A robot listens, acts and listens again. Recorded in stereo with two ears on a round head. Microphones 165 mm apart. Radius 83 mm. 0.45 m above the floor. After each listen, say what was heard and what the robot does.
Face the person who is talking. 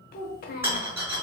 The child speaking: about 50° left or 130° left. Turn 50° left.
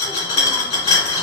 Keep listening.
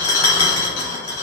Keep listening.
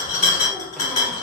I heard a child speaking, but can't make it out now. It was about straight ahead or 80° left.